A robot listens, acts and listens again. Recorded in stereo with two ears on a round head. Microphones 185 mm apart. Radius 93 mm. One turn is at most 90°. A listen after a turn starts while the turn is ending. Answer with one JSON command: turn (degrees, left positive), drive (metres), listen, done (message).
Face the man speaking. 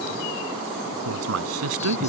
{"turn": -90}
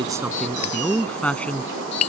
{"done": "Found it: a man speaking, straight ahead."}